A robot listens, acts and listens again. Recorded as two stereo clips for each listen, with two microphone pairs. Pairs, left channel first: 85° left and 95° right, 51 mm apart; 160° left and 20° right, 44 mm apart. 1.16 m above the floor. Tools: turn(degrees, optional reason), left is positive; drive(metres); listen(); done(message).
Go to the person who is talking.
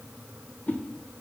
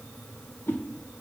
listen()
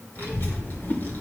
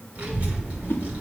turn(degrees=40, reason="The child speaking: 40° left.")
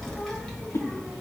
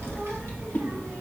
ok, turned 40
turn(degrees=10, reason="The child speaking is now 10° left.")
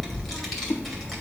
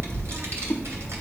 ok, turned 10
drive(metres=1.0)
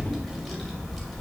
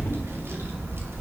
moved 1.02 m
drive(metres=1.0)
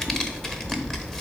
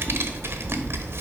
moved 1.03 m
drive(metres=1.0)
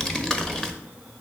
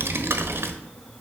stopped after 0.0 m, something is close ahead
turn(degrees=10, reason="The child speaking is now 10° left.")
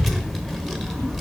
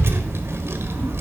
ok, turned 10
done("I am next to the child speaking.")